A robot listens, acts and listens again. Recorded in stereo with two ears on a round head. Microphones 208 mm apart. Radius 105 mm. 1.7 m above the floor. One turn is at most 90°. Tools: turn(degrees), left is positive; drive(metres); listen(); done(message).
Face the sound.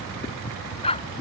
turn(degrees=25)
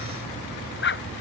turn(degrees=90)
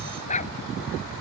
turn(degrees=30)
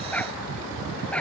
done("Facing the dog barking.")